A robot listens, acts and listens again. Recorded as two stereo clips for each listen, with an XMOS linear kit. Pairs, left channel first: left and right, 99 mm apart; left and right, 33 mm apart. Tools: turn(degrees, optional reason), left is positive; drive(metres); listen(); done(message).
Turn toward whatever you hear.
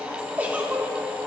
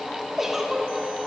turn(degrees=-15, reason="The giggle: about 15° right or 165° right.")
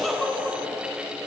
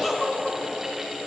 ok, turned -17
done("Found it: a giggle, straight ahead.")